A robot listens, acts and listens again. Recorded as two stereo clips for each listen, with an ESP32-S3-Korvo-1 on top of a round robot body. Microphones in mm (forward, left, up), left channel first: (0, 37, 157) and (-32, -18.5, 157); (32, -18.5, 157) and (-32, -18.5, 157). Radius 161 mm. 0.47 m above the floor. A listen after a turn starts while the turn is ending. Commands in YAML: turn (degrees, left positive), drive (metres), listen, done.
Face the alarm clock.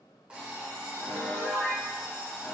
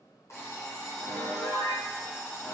turn: -45
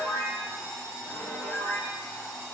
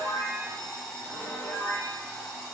done: "Found it: an alarm clock, straight ahead, 1 to 2 m away."